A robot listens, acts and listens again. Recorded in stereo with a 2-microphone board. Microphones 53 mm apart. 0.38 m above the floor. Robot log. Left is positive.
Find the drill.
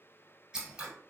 cmd idle
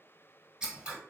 cmd idle
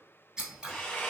note: The drill: about 20° left or 160° left.
cmd yaw +20
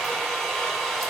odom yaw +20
end: Facing the drill, under 1 m away.